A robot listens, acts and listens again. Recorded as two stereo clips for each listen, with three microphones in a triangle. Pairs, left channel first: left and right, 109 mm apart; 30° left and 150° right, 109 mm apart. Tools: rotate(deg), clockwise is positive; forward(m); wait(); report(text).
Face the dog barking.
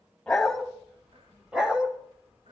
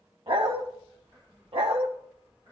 rotate(170)
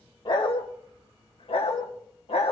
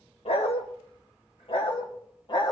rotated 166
rotate(-75)
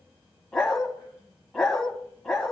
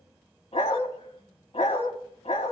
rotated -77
report("Found it: a dog barking, straight ahead, 2 to 4 m away.")